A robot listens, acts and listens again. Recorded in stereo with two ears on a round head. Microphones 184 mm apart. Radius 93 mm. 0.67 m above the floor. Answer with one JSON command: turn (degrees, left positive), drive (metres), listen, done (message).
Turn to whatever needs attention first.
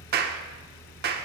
{"listen": true}
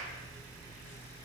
{"listen": true}
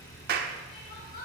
{"turn": 40}
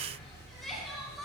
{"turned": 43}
{"done": "Facing the crying, 2 to 4 m away."}